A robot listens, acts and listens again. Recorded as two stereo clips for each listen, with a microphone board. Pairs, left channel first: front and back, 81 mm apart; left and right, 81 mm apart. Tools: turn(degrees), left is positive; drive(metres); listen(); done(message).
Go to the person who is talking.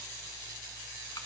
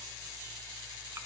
listen()
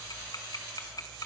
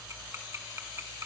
listen()
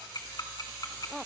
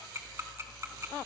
done("I can't make out anyone speaking, only ticking.")